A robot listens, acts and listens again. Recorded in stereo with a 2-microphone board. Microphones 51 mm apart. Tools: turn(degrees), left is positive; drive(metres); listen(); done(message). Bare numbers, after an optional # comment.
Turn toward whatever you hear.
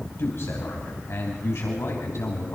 # The man speaking: about 65° left or 115° left.
turn(65)
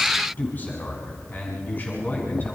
# So it is at 40° left.
turn(40)
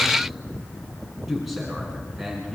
done("Facing the man speaking.")